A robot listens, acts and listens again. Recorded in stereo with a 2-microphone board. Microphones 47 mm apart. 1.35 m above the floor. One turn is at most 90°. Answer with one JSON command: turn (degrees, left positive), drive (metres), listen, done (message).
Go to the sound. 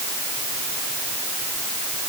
{"listen": true}
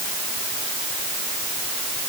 {"listen": true}
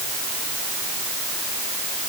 {"done": "I can't make out anything to turn to."}